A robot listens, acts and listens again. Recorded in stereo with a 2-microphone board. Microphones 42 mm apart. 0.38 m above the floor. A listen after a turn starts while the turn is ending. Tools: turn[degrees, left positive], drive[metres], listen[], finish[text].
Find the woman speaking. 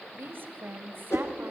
Thought: The woman speaking: about 55° right or 125° right.
Action: turn[-55]
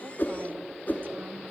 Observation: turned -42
Action: listen[]
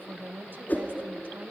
Thought: So it is at 60° right.
Action: turn[-60]
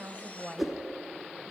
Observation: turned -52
Action: finish[Facing the woman speaking, 1 to 2 m away.]